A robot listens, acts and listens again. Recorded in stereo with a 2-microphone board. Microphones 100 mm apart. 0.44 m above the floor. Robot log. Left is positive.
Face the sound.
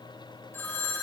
note: The phone ringing: about 25° left or 155° left.
cmd yaw +25
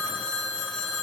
end: Facing the phone ringing, 1 to 2 m away.